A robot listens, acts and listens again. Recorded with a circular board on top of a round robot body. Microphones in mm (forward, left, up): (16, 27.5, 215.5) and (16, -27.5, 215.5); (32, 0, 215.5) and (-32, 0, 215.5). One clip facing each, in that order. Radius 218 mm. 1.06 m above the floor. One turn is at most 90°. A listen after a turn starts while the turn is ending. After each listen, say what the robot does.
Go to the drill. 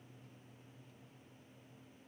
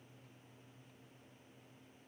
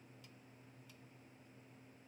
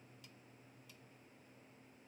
Keep listening.
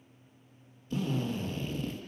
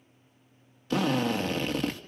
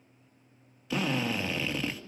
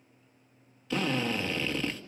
Turn 85° right.
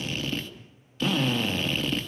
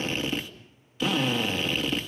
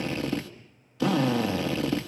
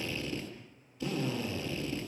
Drive 1.0 m forward.
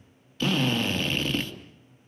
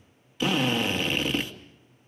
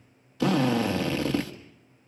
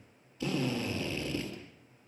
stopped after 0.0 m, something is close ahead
Turn 10° right.
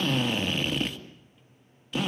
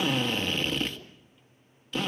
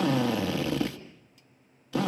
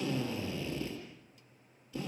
Something is in my way. I am facing the drill but have not reached it.